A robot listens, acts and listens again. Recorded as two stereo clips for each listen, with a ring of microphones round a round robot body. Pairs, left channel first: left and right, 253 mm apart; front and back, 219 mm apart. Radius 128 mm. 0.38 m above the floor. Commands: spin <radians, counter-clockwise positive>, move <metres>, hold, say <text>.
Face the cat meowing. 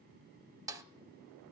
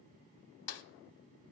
hold
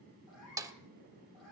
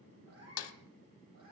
spin 3.14
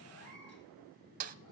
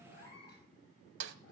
spin 0.79
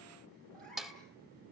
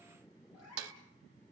say Facing the cat meowing.